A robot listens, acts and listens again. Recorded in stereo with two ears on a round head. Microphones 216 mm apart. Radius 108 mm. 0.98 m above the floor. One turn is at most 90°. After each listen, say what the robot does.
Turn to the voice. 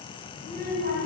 Turn 35° right.
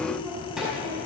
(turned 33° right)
Found it: a child speaking, straight ahead.